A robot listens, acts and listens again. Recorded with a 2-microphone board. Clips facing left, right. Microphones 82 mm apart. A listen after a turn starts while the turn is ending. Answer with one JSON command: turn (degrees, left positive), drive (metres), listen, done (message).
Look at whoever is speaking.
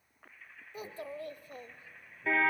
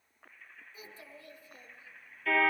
{"turn": 60}
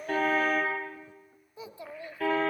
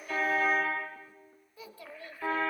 {"turn": 25}
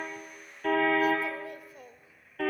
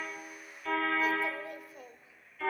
{"done": "Facing the child speaking."}